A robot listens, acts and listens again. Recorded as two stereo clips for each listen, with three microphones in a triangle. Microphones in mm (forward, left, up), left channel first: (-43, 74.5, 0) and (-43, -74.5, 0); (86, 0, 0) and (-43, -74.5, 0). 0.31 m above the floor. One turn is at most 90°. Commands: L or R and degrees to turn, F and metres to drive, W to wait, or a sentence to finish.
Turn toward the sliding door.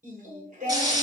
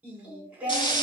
W
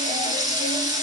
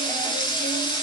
W
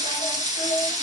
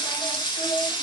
I can't make out a sliding door, only singing and frying.